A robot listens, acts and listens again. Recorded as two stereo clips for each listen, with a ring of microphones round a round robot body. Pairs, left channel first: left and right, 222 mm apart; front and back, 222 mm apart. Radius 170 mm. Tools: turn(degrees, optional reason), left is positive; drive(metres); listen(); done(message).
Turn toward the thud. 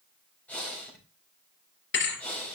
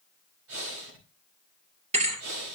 turn(degrees=120, reason="The thud: 120° left.")
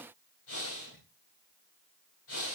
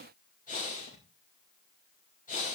done("I heard a thud from this way, but can't make it out now.")